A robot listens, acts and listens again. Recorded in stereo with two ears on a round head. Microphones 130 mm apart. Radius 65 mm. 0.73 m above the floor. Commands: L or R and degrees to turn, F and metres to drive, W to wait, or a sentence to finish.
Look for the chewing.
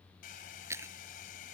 R20
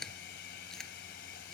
Found it: chewing, straight ahead.